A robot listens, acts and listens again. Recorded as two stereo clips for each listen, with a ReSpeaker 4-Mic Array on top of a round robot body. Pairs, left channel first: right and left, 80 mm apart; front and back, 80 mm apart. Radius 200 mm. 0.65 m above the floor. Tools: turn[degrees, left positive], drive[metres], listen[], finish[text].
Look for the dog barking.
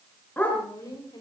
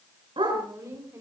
Thought: The dog barking: 160° right.
Action: turn[-160]
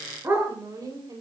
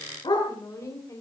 Thought: The dog barking is now 30° left.
Action: turn[30]
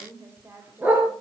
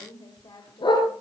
Thought: The dog barking is now 25° left.
Action: turn[25]
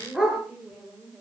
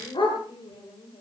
Thought: The dog barking is now 10° left.
Action: turn[10]
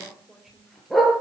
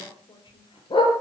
Action: finish[Facing the dog barking.]